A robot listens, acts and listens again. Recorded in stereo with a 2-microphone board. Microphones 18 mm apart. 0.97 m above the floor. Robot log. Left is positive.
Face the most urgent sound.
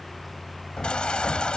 cmd yaw +90
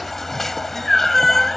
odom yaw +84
note: So it is at 10° left.
cmd yaw +10
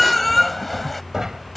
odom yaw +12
end: Found it: a baby crying, straight ahead.